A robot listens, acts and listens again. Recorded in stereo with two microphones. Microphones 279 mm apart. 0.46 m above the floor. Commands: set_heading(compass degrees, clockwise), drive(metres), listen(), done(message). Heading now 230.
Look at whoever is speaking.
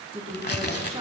set_heading(250)
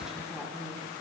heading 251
done("Found it: a woman speaking, straight ahead, over 4 m away.")